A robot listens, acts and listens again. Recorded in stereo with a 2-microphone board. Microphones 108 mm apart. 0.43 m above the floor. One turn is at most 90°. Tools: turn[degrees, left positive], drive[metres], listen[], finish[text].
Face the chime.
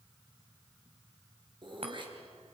Thought: The chime: about 65° right or 115° right.
Action: turn[-65]
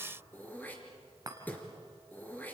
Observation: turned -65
Thought: So it is at 40° right.
Action: turn[-40]
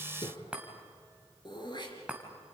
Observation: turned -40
Thought: The chime is now 10° right.
Action: turn[-10]
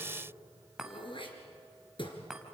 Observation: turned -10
Action: finish[Found it: a chime, straight ahead, 2 to 4 m away.]